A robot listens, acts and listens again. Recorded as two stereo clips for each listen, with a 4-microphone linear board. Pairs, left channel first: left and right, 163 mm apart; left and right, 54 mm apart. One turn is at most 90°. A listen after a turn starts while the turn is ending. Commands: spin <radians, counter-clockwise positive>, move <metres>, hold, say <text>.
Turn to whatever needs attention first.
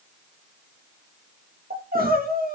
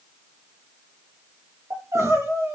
spin -1.13
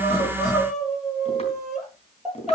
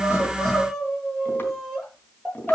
say Found it: crying, straight ahead.